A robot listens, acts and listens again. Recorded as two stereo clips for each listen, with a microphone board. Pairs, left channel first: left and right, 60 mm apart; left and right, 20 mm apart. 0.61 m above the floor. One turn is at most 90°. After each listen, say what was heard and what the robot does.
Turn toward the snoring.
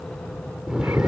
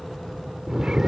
Turn 30° right.
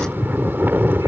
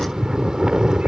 So it is at 135° right. Turn 90° right.
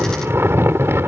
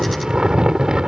The snoring is now 55° right. Turn 55° right.
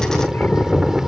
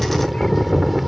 The snoring is now 10° right. Turn 10° right.
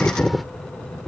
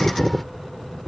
Facing the snoring.